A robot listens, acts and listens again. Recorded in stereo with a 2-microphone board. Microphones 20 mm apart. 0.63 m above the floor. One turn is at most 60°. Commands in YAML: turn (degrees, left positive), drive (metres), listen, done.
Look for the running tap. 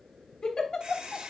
turn: -40
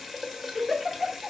done: "Found it: a running tap, straight ahead, 1 to 2 m away."